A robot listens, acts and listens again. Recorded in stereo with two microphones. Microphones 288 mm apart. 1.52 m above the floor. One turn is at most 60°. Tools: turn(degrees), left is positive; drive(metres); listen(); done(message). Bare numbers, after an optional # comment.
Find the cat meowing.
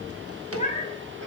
# The cat meowing: about 25° left or 155° left.
turn(25)
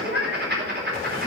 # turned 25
# So it is at 125° left.
turn(60)
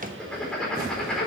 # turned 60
# Nothing new. It was at 65° left.
turn(60)
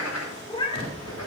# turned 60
# The cat meowing is now 20° left.
turn(20)
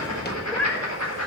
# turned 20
done("Found it: a cat meowing, straight ahead, 1 to 2 m away.")